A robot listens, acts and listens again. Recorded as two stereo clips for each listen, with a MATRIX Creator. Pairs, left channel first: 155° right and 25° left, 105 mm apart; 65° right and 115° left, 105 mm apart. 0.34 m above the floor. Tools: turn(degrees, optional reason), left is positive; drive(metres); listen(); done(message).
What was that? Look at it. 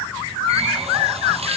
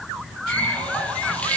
turn(degrees=10, reason="The running tap: 10° left.")
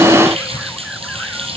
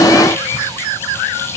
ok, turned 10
done("Facing the running tap, over 4 m away.")